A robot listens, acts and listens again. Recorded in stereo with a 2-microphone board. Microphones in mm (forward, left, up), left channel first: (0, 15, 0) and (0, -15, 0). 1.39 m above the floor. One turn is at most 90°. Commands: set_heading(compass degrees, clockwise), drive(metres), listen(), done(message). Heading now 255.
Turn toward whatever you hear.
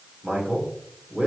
set_heading(345)
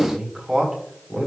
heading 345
set_heading(355)
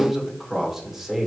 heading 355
done("Facing the man speaking, 2 to 4 m away.")